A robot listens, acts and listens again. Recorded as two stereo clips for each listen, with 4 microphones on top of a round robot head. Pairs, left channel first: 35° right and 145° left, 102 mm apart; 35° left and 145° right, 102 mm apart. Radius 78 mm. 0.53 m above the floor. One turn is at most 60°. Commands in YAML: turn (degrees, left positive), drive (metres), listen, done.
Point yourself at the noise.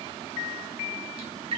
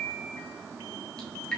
turn: 60
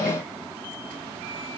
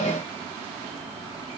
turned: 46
turn: 60
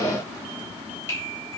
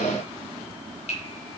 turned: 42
turn: 30
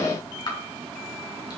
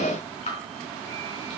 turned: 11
turn: 20
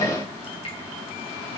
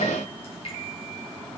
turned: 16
done: "Facing the dripping."